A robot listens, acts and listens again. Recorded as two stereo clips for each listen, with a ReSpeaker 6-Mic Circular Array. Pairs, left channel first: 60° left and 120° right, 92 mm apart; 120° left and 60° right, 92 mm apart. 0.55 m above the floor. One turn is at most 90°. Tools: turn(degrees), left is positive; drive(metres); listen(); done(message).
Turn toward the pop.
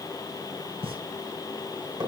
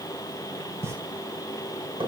turn(degrees=-90)
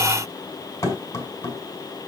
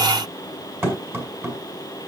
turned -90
turn(degrees=-30)
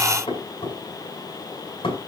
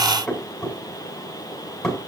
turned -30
done("I heard a pop from this way, but can't make it out now.")